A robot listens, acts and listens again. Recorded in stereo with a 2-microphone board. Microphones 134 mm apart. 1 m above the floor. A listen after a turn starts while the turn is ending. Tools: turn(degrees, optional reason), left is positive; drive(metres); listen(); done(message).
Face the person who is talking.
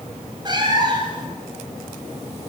listen()
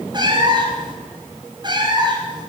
listen()
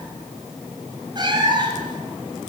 done("I can't make out anyone speaking to turn to.")